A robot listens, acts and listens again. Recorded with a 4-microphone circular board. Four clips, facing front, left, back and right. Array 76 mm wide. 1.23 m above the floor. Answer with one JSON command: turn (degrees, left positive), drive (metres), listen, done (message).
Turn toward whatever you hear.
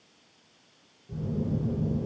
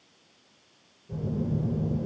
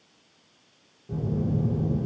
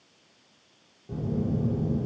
{"turn": -125}
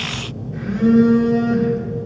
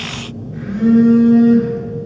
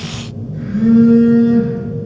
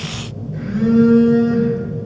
{"turn": 30}
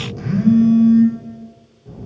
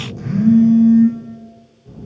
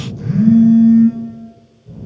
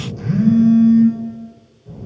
{"turn": 15}
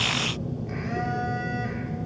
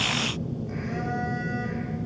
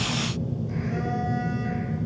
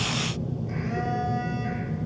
{"done": "Facing the phone buzzing, over 4 m away."}